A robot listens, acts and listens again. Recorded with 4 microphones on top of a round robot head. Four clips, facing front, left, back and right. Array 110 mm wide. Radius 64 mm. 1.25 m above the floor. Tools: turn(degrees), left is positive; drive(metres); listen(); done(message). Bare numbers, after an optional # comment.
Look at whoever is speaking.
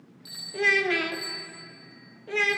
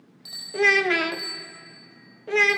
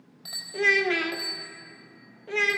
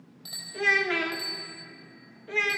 # The child speaking: 100° left.
turn(100)
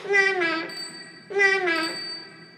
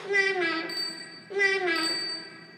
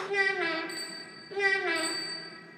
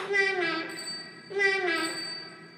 done("Found it: a child speaking, straight ahead, under 1 m away.")